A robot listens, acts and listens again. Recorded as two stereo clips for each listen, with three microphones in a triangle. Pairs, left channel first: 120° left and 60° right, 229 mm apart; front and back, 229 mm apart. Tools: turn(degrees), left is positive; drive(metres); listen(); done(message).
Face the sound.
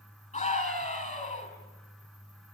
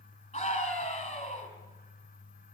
turn(degrees=65)
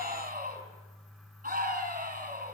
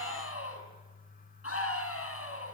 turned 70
done("Facing the scream, over 4 m away.")